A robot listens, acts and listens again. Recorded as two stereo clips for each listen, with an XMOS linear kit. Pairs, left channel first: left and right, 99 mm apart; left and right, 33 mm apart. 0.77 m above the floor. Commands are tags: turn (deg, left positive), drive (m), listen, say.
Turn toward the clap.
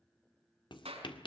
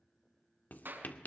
<turn deg="-90"/>
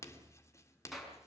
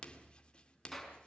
<say>Facing the clap.</say>